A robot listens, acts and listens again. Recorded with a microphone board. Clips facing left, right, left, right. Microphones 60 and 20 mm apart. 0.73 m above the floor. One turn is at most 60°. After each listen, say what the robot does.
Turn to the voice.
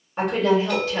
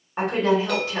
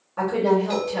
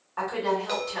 Turn 25° right.
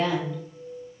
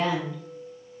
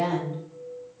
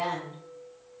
Facing the woman speaking, 1 to 2 m away.